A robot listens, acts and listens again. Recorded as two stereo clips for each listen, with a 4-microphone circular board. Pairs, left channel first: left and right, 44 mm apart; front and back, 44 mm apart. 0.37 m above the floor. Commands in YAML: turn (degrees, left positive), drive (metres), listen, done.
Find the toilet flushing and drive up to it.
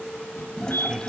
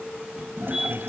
turn: 160
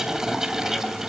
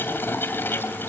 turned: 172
turn: -15
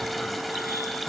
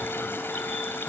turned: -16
drive: 1.0
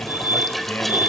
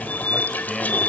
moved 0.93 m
drive: 1.0
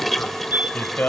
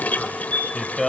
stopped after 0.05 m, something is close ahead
done: "Arrived at the toilet flushing, straight ahead."